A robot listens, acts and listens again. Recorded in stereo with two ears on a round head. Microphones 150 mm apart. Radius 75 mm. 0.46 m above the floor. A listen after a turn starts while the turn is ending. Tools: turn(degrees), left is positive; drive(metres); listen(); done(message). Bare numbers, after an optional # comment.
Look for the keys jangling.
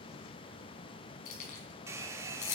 # The keys jangling: about 45° left or 135° left.
turn(45)
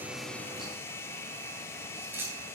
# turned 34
# So it is at 15° right.
turn(-15)
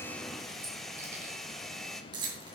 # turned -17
# The keys jangling is now 25° right.
turn(-25)
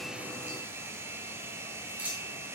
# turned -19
# The keys jangling is now 10° right.
turn(-10)
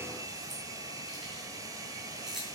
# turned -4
done("Found it: keys jangling, straight ahead.")